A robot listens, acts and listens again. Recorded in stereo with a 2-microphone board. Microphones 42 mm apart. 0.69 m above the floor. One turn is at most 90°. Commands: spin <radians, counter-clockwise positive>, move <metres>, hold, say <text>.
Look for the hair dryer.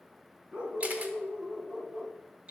hold
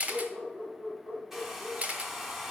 spin -0.52
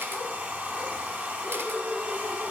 spin -1.57
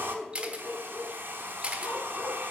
spin -1.05
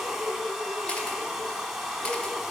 say Facing the hair dryer, 1 to 2 m away.